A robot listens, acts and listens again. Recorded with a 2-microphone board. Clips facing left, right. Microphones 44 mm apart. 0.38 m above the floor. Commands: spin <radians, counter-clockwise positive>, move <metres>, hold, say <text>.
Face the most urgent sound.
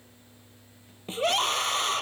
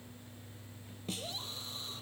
spin 1.57
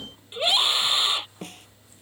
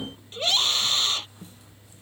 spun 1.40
spin 0.26
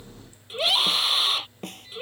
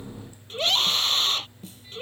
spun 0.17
say Facing the scream.